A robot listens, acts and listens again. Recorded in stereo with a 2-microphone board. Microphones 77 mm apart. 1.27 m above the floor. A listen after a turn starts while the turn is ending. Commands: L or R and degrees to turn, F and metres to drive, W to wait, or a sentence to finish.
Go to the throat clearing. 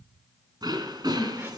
R65
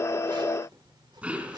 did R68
R20
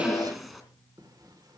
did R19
F1.0
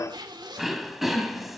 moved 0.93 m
F1.0
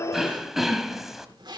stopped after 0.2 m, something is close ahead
I am next to the throat clearing.